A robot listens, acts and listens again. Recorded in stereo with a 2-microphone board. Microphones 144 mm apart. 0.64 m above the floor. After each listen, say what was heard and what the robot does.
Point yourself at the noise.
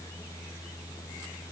Keep listening.
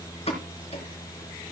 The pop: about 45° left or 135° left. Turn 45° left.
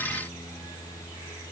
Keep listening.
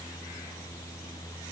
I heard a pop, but can't make it out now. It was about straight ahead or 90° left.